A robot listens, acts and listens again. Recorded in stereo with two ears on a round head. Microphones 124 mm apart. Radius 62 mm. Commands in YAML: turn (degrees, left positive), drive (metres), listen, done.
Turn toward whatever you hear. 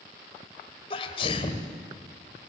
turn: 40
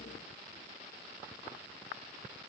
listen: true
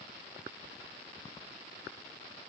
done: "I heard a sneeze, but can't make it out now. It was about straight ahead or 100° left."